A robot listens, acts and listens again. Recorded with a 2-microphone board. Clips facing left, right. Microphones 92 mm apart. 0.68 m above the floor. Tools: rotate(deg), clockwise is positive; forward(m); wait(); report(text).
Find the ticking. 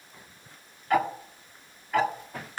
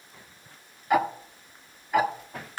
rotate(30)
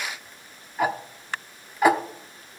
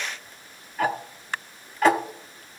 rotate(-15)
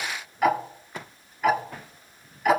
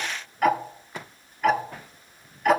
report("Found it: ticking, straight ahead.")